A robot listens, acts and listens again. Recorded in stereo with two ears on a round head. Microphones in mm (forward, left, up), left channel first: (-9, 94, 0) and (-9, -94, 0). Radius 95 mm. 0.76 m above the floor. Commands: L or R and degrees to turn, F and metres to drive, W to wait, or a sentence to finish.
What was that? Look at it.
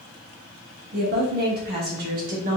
R40
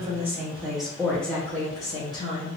L25
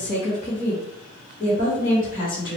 L40
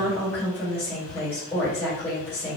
L10
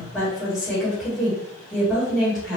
Found it: a woman speaking, straight ahead.